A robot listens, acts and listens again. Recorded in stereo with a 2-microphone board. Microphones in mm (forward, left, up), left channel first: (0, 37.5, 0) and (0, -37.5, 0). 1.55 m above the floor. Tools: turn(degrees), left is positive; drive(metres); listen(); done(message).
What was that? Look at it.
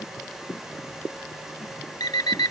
turn(degrees=65)
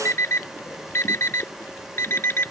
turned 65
turn(degrees=40)
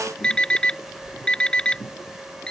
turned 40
turn(degrees=15)
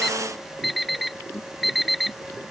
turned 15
done("Facing the alarm clock.")